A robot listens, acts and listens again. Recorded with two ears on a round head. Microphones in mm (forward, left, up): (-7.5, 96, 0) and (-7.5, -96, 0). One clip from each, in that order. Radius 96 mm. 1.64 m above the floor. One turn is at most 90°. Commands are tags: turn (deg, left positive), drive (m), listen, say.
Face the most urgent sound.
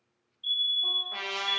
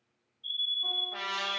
<turn deg="50"/>
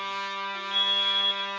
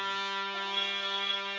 <turn deg="75"/>
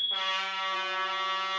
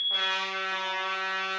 <turn deg="35"/>
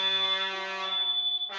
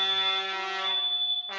<say>Found it: a fire alarm, straight ahead.</say>